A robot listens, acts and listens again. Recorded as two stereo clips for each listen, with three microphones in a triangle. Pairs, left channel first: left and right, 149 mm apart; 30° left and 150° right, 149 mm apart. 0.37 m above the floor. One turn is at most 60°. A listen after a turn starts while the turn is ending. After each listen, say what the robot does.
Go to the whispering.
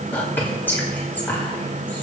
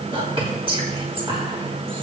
Turn 60° left.
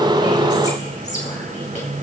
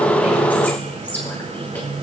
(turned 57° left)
Turn 60° left.
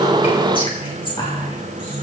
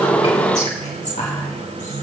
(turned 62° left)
Turn 45° left.
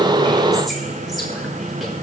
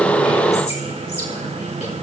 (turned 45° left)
Keep listening.
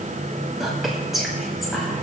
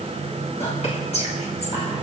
Drive 1.0 m forward.
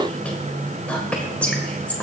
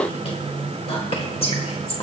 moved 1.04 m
Turn 15° left.
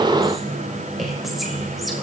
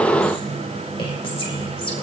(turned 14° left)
Drive 1.0 m forward.
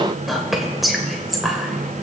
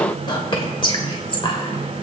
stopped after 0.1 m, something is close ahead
Arrived at the whispering, straight ahead.